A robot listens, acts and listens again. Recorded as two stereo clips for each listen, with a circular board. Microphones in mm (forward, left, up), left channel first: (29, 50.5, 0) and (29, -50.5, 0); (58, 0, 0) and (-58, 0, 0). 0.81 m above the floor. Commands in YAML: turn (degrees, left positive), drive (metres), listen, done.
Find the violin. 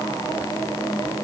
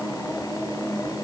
listen: true
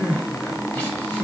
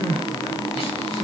listen: true
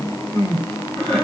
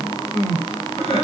done: "I can't make out a violin to turn to."